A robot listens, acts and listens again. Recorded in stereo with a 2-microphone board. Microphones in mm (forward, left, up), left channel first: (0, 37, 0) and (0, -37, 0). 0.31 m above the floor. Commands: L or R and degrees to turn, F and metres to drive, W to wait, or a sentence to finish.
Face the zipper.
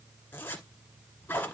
L30
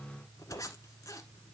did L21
L130
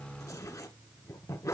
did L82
L50
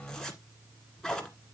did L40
L10
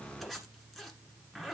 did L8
Facing the zipper, 1 to 2 m away.